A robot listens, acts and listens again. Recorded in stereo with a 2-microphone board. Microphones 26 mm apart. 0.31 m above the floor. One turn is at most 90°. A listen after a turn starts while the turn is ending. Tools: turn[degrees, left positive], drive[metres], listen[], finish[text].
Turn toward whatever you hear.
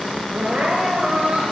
Thought: The crying: about 60° right or 120° right.
Action: turn[-60]
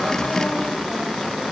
Action: listen[]
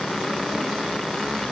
Action: listen[]
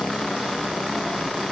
Action: finish[I heard crying, but can't make it out now. It was about straight ahead or 60° right.]